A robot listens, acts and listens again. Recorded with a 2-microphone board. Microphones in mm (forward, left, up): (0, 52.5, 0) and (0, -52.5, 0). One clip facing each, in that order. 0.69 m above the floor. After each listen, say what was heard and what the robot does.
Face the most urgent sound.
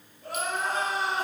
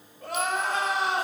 Turn 90° right.
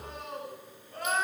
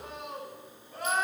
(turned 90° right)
So it is at 10° right. Turn 10° right.
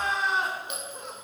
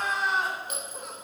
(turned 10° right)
Found it: crying, straight ahead, 2 to 4 m away.